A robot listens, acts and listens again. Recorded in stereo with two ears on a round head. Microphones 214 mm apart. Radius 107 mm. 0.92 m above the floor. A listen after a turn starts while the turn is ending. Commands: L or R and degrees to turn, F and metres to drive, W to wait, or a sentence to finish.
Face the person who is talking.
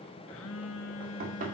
W
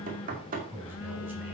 R30
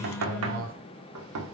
R140
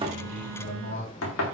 L35
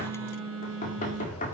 W
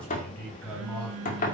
Found it: a man speaking, straight ahead.